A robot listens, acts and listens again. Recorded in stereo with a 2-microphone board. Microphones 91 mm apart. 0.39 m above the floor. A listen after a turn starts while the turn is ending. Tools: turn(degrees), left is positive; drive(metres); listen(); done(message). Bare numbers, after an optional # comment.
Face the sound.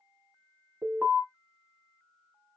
turn(-30)
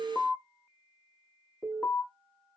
# So it is at 20° left.
turn(20)
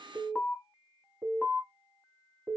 done("Found it: an alarm, straight ahead.")